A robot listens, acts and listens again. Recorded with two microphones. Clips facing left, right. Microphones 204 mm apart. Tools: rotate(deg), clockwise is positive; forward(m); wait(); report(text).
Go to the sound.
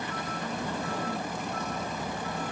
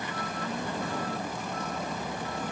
wait()
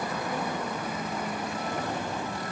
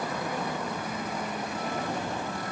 wait()
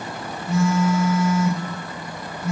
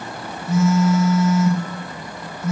rotate(-30)
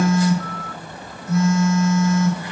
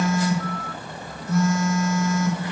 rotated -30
rotate(-155)
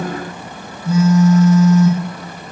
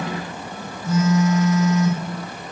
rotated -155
rotate(-35)
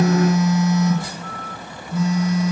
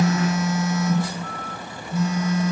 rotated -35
forward(1.0)
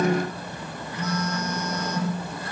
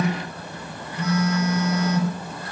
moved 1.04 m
rotate(10)
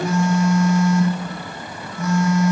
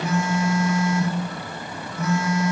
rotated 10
forward(1.0)
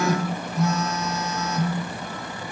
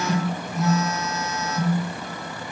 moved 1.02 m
forward(1.0)
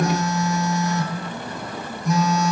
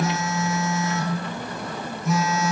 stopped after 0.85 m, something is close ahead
report("I am next to the phone buzzing.")